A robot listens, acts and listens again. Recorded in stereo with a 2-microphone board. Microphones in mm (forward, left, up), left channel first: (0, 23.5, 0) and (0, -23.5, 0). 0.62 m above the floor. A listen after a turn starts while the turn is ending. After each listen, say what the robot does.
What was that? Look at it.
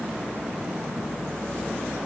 Keep listening.
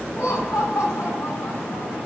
Turn 75° left.
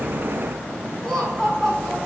Facing the laughter, over 4 m away.